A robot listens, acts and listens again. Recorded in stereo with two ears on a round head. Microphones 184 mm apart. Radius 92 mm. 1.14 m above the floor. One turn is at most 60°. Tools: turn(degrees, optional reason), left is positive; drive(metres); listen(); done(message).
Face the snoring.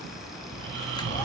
turn(degrees=-55, reason="The snoring: about 55° right or 125° right.")
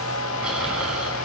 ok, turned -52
listen()
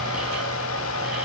listen()
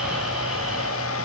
done("I heard snoring, but can't make it out now. It was about 5° right or 70° right.")